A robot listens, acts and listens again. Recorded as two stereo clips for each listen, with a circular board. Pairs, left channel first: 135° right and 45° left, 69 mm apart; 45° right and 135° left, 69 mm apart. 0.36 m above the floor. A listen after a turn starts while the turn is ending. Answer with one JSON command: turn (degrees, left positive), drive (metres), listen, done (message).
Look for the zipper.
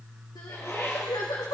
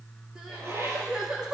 {"turn": 180}
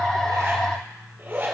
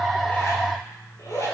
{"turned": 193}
{"turn": -10}
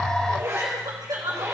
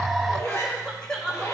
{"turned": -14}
{"done": "Found it: a zipper, straight ahead, over 4 m away."}